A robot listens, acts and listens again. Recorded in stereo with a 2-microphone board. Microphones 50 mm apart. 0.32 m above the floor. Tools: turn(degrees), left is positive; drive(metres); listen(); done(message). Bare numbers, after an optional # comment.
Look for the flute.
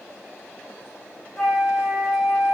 turn(30)
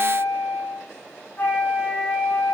# So it is at 155° left.
turn(155)
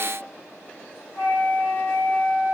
# The flute is now 40° left.
turn(40)
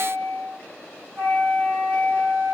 # The flute is now 15° left.
turn(15)
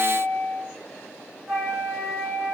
done("Facing the flute.")